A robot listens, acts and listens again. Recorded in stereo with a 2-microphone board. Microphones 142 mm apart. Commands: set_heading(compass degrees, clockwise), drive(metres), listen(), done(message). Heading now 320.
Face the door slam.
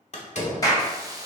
set_heading(265)
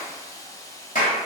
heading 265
listen()
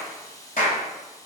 done("I heard a door slam, but can't make it out now. It was about straight ahead or 70° left.")